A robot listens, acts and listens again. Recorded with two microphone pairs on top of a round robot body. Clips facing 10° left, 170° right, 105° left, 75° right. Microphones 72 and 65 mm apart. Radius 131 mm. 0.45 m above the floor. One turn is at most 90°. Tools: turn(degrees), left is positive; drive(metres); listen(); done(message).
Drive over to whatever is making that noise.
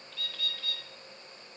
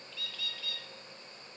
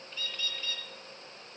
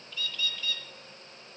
turn(degrees=55)
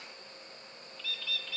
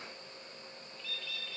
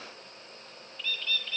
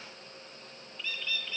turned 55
drive(metres=1.0)
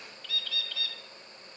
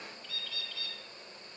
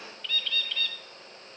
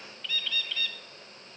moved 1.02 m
turn(degrees=15)
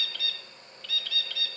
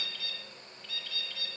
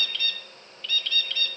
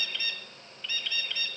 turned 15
drive(metres=1.0)
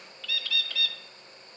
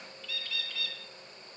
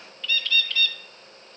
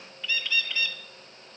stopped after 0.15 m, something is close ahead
done("I am next to the bird.")